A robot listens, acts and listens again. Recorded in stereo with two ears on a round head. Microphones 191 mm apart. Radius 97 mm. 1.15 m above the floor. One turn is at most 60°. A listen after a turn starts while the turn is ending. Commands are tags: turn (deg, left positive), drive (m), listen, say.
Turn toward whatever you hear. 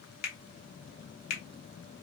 <turn deg="45"/>
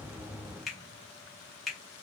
<say>Found it: a finger snap, straight ahead.</say>